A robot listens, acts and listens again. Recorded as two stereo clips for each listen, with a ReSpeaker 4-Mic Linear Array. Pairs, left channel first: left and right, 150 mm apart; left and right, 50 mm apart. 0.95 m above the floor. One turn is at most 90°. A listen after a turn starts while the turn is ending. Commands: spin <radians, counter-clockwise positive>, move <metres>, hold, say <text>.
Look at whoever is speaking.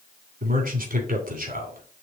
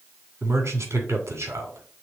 spin -1.13
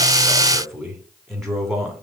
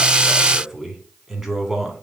say Found it: a man speaking, straight ahead, 2 to 4 m away.